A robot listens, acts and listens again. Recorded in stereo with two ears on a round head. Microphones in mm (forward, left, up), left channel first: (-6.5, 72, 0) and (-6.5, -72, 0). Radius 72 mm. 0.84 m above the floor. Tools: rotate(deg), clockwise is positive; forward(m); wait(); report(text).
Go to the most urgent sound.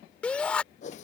rotate(-30)
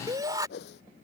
rotate(20)
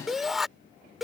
forward(1.0)
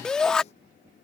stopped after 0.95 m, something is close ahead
report("Arrived at the shout, straight ahead.")